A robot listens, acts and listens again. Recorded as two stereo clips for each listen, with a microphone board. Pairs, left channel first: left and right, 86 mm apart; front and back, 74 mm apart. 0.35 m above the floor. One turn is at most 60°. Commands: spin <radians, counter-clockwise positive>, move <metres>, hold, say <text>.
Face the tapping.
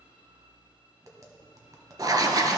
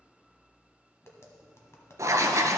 spin -0.87
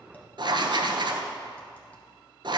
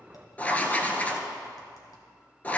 spin 0.26
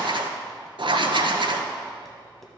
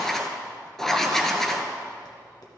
hold
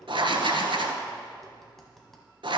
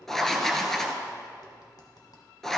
say Found it: tapping, straight ahead, 1 to 2 m away.